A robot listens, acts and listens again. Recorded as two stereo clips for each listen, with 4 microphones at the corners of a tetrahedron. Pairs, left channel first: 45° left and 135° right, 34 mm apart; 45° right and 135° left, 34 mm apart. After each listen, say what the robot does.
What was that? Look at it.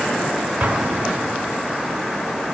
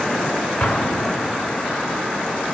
Turn 90° right.
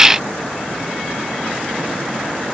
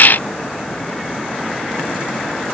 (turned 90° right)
I heard an explosion from this way, but can't make it out now.